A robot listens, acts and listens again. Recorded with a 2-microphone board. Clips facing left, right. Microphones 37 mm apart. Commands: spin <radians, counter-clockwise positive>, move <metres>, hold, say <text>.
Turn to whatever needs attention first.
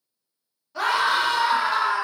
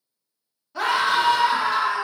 spin 0.52
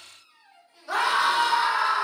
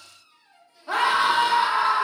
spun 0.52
spin -0.52
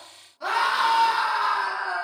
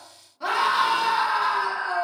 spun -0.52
say Found it: a scream, straight ahead.